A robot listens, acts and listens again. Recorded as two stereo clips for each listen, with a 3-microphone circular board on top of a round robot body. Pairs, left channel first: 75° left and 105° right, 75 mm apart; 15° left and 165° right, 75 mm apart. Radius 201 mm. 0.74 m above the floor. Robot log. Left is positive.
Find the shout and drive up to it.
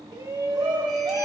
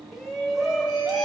note: The shout: 75° right.
cmd yaw -75
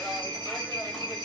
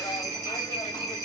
cmd idle
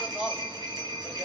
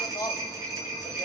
note: The shout is now 10° right.
cmd yaw -10
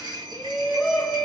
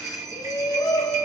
cmd fwd 1.0
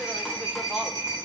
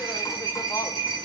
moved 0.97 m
cmd idle
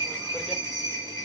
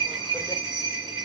cmd idle
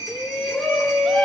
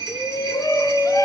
note: The shout is now 10° right.
cmd yaw -10
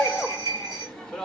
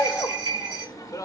cmd fwd 1.0
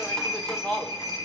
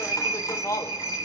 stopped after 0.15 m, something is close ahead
end: Arrived at the shout, straight ahead.